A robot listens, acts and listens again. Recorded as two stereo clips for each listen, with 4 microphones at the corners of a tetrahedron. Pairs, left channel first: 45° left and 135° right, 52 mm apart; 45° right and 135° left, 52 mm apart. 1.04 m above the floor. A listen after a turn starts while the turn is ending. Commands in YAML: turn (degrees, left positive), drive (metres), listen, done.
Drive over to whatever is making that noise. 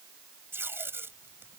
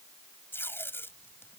turn: -90
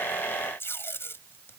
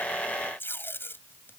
drive: 1.0
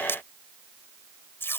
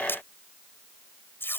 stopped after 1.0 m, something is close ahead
done: "Blocked. The tape being pulled is further on, straight ahead."